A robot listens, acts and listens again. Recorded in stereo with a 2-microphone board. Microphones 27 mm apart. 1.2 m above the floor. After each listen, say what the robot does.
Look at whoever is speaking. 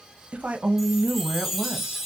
Turn 55° right.
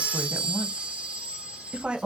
Turn 55° right.
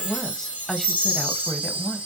Turn 15° left.
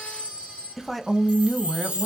Facing the woman speaking, under 1 m away.